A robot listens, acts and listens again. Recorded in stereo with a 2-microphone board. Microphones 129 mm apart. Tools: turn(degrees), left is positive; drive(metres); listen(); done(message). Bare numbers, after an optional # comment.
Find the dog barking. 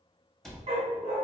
# The dog barking: about 50° right or 130° right.
turn(-50)
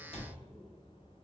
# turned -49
listen()
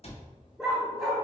done("Facing the dog barking, 1 to 2 m away.")